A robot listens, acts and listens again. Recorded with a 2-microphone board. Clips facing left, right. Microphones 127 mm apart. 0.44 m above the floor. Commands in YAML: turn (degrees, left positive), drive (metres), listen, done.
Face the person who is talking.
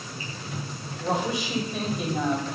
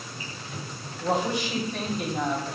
turn: 30
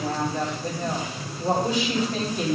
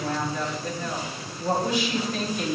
turn: 135
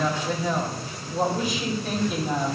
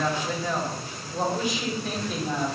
done: "Found it: a woman speaking, straight ahead, 2 to 4 m away."